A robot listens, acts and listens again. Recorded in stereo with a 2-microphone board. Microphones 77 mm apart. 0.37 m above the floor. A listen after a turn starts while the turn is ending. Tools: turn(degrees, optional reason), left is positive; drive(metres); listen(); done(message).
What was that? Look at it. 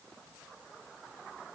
listen()
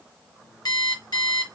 turn(degrees=65, reason="The alarm clock: about 65° left or 115° left.")
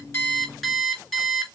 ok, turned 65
done("Facing the alarm clock, 2 to 4 m away.")